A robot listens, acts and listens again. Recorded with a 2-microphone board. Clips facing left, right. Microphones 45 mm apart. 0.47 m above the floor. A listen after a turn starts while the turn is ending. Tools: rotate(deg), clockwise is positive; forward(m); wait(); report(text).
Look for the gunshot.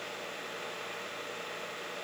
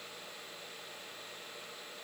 wait()
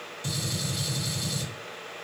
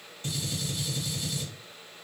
rotate(35)
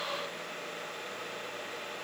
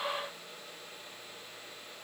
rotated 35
wait()
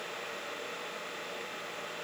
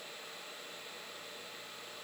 report("I heard a gunshot, but can't make it out now. It was about straight ahead or 110° right.")